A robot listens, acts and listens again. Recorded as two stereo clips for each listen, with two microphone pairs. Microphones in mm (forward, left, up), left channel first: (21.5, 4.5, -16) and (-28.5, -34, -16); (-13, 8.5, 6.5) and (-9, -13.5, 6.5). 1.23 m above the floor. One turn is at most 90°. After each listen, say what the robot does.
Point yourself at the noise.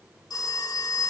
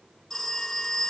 Turn 35° left.
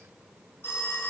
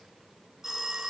Turn 15° right.
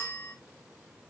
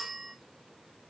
Facing the phone ringing, 2 to 4 m away.